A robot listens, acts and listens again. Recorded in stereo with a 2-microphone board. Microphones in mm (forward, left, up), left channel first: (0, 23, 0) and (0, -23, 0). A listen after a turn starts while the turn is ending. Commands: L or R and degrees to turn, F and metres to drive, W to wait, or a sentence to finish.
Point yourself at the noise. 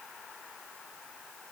W
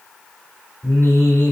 L45
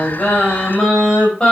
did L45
L10
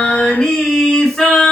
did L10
L10
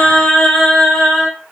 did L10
Found it: singing, straight ahead, 2 to 4 m away.